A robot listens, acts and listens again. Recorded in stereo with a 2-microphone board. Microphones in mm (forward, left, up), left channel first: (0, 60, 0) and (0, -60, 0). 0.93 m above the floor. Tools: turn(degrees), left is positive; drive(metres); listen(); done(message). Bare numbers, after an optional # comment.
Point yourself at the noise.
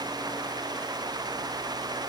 listen()
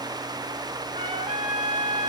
turn(-90)
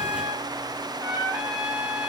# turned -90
# So it is at 15° right.
turn(-15)
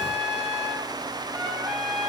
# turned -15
done("Facing the trumpet, over 4 m away.")